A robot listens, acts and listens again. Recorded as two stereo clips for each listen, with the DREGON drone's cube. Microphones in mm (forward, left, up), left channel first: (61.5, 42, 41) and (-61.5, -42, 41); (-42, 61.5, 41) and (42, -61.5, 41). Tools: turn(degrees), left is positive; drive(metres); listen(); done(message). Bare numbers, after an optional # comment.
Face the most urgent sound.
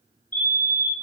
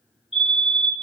# The fire alarm: 30° left.
turn(30)
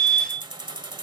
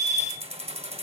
done("Found it: a fire alarm, straight ahead.")